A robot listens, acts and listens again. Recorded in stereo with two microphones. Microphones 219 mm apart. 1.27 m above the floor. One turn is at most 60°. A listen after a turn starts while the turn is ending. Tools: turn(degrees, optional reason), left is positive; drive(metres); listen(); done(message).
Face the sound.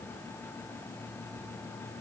listen()
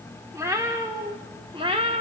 turn(degrees=-30, reason="The cat meowing: about 30° right or 150° right.")
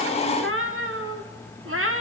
turn(degrees=-60, reason="So it is at 105° right.")
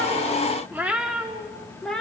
done("Facing the cat meowing.")